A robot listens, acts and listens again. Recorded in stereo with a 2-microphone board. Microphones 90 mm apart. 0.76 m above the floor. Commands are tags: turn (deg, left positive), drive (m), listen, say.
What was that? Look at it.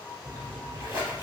<turn deg="-45"/>
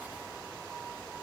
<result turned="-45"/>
<listen/>
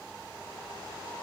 <say>I heard a splash, but can't make it out now. It was about straight ahead or 90° right.</say>